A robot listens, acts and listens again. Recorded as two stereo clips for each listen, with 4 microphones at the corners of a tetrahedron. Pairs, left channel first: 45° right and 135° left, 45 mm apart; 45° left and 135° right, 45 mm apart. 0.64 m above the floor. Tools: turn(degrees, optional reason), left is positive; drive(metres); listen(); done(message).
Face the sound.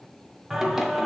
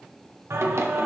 turn(degrees=-140, reason="The singing: 140° right.")
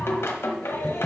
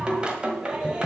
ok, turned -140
turn(degrees=-65, reason="The singing is now 65° right.")
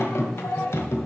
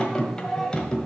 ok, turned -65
turn(degrees=-30, reason="The singing is now 30° right.")
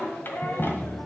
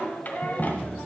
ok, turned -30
done("Facing the singing, 1 to 2 m away.")